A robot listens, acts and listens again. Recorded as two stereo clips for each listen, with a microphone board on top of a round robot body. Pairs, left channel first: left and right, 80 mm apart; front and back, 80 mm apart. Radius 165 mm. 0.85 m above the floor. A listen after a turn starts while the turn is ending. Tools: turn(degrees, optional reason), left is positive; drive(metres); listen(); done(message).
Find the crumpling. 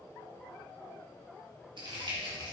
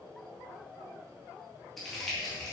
turn(degrees=-85, reason="The crumpling: 85° right.")
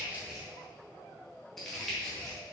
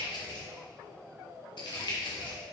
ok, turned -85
done("Facing the crumpling.")